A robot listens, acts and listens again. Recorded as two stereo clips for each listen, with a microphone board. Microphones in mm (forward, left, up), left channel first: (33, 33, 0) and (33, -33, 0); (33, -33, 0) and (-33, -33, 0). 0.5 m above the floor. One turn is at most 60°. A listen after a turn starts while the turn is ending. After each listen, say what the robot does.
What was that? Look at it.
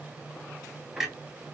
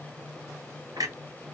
Turn 60° right.
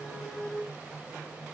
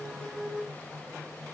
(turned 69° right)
Turn 60° right.
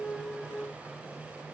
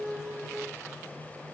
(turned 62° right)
Turn 40° right.
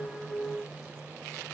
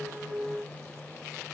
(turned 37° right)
Facing where the clunk came from. I can't hear it now.